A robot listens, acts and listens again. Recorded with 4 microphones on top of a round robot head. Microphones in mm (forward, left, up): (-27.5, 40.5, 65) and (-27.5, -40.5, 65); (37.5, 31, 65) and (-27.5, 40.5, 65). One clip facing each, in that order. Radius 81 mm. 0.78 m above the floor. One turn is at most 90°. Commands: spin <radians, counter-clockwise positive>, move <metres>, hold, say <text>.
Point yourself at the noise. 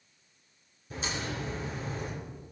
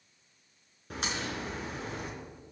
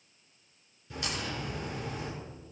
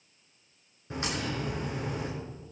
spin -1.57
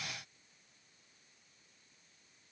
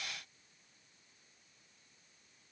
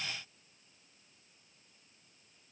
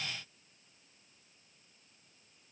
spin -0.52
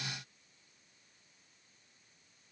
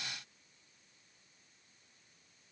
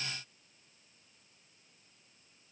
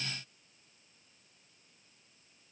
say I heard a crack from this way, but can't make it out now.